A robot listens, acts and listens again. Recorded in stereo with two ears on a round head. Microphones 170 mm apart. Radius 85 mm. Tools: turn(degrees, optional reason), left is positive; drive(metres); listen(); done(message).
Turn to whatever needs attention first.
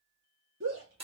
turn(degrees=-90)
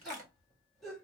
done("Found it: a shout, straight ahead, 2 to 4 m away.")